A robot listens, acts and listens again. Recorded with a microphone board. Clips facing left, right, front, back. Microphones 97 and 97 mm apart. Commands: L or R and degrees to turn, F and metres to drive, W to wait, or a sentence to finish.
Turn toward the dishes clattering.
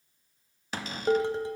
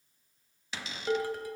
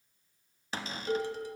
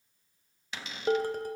L150
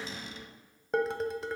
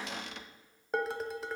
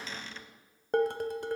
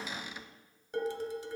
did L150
Facing the dishes clattering.